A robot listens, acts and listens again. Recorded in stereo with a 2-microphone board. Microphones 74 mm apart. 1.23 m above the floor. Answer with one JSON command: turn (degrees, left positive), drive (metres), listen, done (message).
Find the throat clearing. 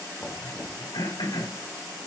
{"turn": 90}
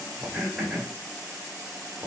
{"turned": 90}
{"turn": -10}
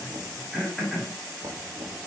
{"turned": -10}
{"done": "Facing the throat clearing, over 4 m away."}